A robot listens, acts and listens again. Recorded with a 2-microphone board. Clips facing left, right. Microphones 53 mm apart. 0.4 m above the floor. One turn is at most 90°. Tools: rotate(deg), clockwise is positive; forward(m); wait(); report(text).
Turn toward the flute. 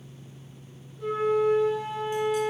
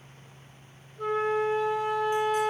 rotate(55)
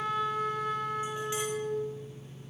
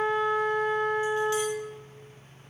rotate(50)
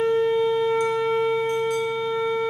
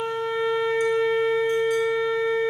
rotate(15)
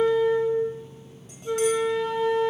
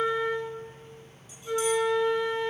report("Facing the flute.")